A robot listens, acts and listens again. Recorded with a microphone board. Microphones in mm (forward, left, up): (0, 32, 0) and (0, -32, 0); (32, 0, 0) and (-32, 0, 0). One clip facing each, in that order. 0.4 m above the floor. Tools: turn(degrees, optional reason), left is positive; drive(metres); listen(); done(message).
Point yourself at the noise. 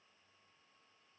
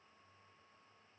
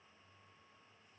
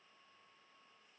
listen()
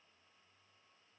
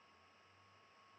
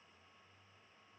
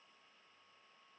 listen()
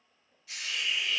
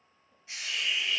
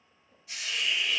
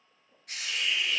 turn(degrees=-150, reason="The hiss: 150° right.")
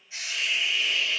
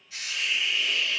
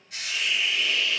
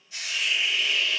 turn(degrees=25, reason="The hiss is now 25° left.")
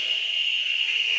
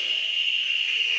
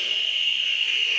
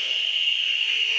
done("Facing the hiss, 1 to 2 m away.")